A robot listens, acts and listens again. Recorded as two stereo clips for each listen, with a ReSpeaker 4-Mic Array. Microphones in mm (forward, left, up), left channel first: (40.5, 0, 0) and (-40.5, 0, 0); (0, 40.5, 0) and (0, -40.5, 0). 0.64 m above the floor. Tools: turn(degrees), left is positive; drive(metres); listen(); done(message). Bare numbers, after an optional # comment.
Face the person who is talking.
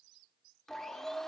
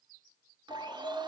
listen()
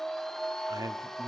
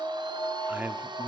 # The man speaking: 155° right.
turn(-155)
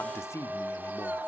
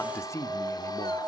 # The man speaking is now 45° left.
turn(45)
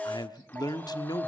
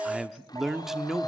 done("Found it: a man speaking, straight ahead, 1 to 2 m away.")